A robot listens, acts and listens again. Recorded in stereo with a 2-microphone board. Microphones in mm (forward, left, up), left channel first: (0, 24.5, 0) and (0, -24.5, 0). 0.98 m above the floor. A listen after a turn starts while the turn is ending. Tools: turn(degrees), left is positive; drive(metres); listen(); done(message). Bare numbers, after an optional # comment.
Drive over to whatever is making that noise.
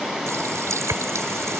turn(-90)
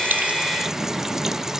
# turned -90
listen()
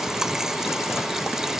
# The running tap is now 10° right.
turn(-10)
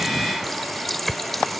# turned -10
drive(1.0)
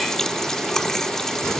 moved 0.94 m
# The running tap is now 10° left.
turn(10)
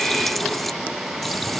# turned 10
drive(1.0)
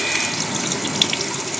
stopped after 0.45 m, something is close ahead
done("Arrived at the running tap, straight ahead.")